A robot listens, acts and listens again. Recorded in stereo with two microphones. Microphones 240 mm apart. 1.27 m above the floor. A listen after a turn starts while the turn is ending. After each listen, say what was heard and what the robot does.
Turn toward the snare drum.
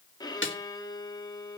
The snare drum: about 55° left or 125° left. Turn 55° left.
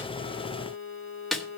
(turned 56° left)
Facing the snare drum.